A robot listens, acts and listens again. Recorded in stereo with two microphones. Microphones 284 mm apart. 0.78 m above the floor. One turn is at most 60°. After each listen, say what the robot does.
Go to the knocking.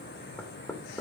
Turn 30° left.
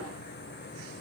Keep listening.
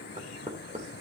Turn 25° right.
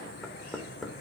Drive 1.0 m forward.
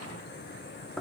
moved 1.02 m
Drive 1.0 m forward.
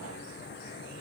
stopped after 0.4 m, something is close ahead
Keep listening.
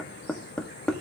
I am next to the knocking.